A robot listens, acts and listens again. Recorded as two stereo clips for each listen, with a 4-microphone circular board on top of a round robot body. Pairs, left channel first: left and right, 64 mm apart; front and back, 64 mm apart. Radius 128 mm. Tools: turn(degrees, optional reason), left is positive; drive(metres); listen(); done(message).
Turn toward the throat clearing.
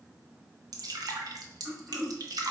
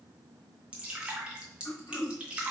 turn(degrees=-15, reason="The throat clearing: 15° right.")
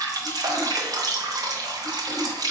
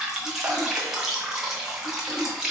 listen()
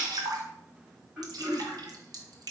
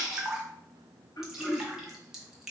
done("Found it: throat clearing, straight ahead.")